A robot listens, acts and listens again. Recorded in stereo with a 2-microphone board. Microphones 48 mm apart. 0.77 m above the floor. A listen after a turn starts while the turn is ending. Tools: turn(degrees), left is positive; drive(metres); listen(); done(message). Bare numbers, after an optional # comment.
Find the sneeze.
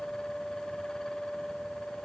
listen()
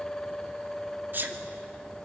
# The sneeze: about 50° right or 130° right.
turn(-50)
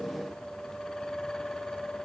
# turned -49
listen()
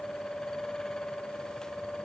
done("I heard a sneeze, but can't make it out now. It was about straight ahead or 80° right.")